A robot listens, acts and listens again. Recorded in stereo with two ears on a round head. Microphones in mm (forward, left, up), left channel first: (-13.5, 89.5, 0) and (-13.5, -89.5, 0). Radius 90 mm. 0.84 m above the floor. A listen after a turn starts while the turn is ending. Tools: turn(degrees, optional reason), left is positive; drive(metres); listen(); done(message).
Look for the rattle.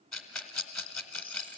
turn(degrees=30)
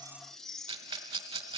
turn(degrees=-25, reason="So it is at 25° right.")
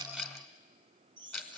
done("Found it: a rattle, straight ahead.")